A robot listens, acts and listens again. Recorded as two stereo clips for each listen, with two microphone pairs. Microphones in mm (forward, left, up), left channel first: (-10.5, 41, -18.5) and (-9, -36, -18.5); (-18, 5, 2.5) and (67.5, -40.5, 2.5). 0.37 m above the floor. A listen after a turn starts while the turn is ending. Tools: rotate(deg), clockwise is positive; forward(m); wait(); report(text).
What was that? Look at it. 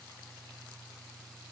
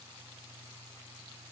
wait()
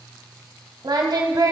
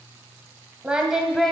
rotate(120)
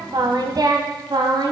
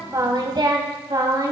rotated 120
rotate(80)
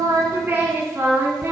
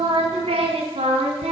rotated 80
rotate(35)
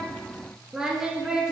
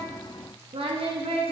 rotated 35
rotate(10)
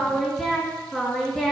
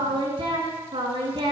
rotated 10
report("Found it: singing, straight ahead, 2 to 4 m away.")